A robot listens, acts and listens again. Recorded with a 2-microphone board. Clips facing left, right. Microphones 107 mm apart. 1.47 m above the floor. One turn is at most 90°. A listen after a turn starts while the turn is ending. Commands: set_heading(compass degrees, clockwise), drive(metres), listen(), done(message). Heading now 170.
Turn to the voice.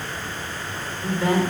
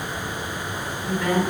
set_heading(145)
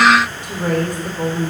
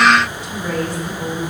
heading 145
set_heading(55)
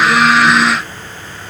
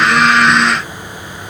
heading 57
set_heading(17)
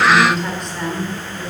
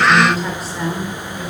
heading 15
done("Found it: a woman speaking, straight ahead.")